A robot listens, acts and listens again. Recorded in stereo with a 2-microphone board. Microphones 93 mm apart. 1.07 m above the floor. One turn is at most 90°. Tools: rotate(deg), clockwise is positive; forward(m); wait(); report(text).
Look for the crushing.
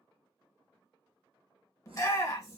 wait()
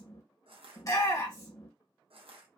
rotate(90)
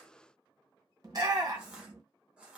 rotate(10)
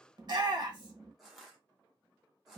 report("Facing the crushing, under 1 m away.")